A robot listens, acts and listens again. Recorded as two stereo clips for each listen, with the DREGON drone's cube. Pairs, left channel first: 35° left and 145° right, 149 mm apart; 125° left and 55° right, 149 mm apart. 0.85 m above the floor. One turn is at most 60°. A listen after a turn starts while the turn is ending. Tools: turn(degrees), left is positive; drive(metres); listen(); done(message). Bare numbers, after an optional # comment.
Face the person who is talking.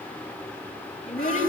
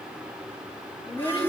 # The child speaking: 70° left.
turn(60)
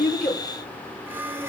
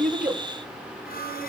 # Nothing new. It was at 10° left.
turn(10)
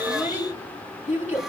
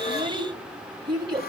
done("Facing the child speaking, over 4 m away.")